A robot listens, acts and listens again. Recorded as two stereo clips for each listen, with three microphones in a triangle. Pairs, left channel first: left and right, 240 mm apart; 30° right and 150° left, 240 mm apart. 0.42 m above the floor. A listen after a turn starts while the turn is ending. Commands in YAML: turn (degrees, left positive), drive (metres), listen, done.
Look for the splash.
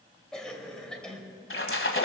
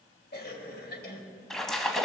turn: 60
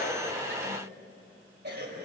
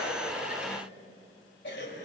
done: "Facing where the splash came from. I can't hear it now."